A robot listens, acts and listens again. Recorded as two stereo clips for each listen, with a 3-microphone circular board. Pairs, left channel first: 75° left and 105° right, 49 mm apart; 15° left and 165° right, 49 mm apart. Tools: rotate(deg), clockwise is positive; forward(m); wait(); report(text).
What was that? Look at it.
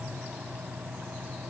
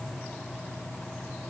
wait()
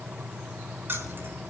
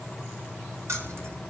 rotate(145)
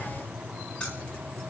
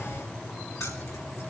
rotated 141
report("Found it: keys jangling, straight ahead.")